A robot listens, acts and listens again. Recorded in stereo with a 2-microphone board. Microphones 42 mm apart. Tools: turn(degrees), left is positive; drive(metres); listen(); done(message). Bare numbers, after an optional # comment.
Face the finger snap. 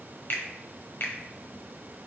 # The finger snap: about 60° left or 120° left.
turn(60)
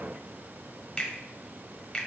# So it is at 20° left.
turn(20)
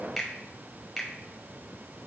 done("Facing the finger snap.")